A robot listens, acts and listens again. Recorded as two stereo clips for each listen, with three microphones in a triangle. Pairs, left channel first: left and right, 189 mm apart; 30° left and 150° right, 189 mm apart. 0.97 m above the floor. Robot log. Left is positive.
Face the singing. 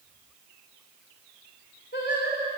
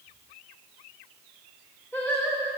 note: The singing: 115° left.
cmd yaw +115
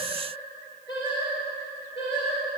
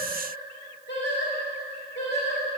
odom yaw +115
note: The singing is now 35° left.
cmd yaw +35
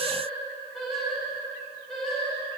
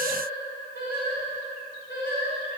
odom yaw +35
end: Facing the singing.